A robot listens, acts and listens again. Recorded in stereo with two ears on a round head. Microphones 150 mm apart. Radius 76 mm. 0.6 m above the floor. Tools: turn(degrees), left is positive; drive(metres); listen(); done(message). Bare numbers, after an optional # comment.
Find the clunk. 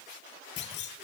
# The clunk: about 75° left or 105° left.
turn(75)
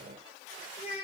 listen()
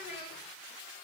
done("I heard a clunk, but can't make it out now. It was about straight ahead or 30° left.")